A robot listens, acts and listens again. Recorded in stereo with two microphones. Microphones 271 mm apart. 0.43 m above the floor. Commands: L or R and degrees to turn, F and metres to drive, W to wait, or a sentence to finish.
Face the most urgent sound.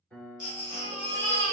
L30
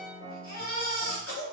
L125
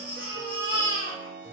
L20
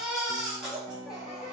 Found it: a baby crying, straight ahead, 1 to 2 m away.